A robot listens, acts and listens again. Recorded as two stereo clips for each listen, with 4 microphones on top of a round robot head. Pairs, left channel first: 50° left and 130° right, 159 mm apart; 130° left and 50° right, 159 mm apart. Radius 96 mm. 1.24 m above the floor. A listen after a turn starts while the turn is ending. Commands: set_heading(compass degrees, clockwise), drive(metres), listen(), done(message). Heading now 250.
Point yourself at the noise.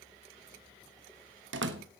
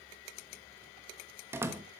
set_heading(15)
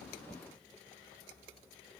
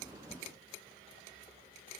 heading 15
done("Facing where the door slam came from. I can't hear it now.")